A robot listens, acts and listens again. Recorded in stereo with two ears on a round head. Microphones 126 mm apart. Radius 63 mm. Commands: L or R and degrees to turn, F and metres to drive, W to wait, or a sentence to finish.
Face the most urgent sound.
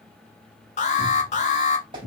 L55
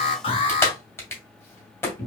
L50
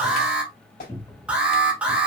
R10
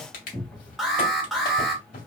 Facing the alarm, 1 to 2 m away.